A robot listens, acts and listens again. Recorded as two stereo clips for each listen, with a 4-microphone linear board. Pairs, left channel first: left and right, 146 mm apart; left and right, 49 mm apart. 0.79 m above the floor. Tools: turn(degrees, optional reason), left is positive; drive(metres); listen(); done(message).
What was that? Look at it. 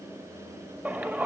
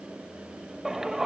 turn(degrees=-30)
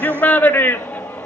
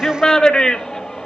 turn(degrees=15, reason="So it is at 15° left.")
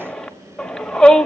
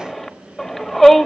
done("Facing the shout.")